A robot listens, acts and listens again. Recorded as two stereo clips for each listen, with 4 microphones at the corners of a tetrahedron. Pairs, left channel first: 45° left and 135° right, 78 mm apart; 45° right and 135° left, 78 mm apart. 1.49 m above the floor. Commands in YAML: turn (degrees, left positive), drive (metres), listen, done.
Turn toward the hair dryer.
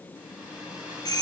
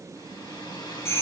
turn: -60
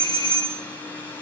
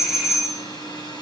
turn: -25
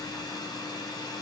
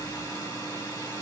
done: "Facing the hair dryer, 1 to 2 m away."